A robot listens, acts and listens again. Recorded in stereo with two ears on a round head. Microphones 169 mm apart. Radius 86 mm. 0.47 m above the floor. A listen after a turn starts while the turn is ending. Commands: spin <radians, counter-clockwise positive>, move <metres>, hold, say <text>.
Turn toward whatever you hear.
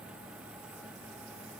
hold
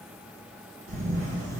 spin -0.79
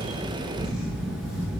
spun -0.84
say Found it: a camera shutter, straight ahead.